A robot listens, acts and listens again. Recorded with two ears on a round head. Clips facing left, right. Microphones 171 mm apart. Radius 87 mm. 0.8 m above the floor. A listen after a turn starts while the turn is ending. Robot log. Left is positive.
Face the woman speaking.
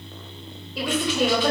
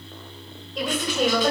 cmd yaw +30
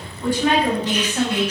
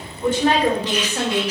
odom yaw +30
note: So it is at 35° right.
cmd yaw -35
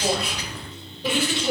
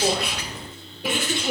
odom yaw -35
note: The woman speaking is now 10° right.
cmd yaw -10
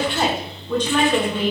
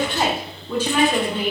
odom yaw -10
note: The woman speaking is now 10° right.
cmd yaw -10
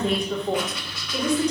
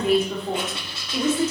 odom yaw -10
end: Facing the woman speaking, 2 to 4 m away.